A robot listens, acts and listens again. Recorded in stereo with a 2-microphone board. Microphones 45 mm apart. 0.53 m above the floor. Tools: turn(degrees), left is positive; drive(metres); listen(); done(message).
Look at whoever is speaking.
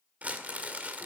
listen()
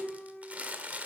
listen()
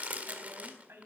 turn(degrees=-60)
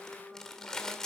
listen()
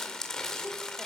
listen()
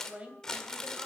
turn(degrees=-30)
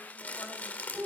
listen()
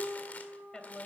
turn(degrees=15)
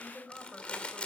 done("Found it: a woman speaking, straight ahead, 2 to 4 m away.")